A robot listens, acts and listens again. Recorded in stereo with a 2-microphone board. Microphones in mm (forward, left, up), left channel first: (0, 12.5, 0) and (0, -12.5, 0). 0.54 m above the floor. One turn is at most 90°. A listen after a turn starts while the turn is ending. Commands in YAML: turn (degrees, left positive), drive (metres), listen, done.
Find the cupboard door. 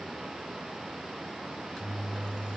listen: true
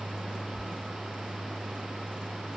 listen: true
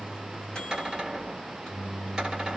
turn: -25
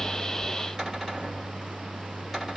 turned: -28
listen: true
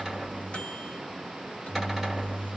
listen: true
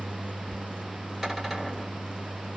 done: "I heard a cupboard door, but can't make it out now. It was about 5° left or 130° right."